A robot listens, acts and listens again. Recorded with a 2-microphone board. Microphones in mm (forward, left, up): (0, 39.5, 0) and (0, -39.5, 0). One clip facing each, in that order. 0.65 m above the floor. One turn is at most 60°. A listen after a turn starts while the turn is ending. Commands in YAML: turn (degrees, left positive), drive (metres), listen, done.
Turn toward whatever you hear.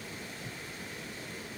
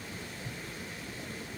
listen: true
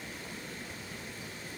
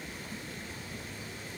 listen: true
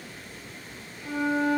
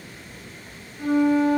turn: -60
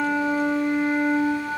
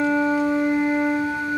turn: -15
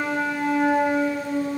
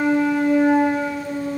done: "Facing the flute, over 4 m away."